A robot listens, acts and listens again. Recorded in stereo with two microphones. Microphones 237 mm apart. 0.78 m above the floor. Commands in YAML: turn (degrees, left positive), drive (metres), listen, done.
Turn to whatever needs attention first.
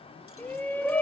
turn: 30
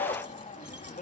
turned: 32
turn: 140
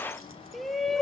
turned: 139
done: "Found it: a shout, straight ahead."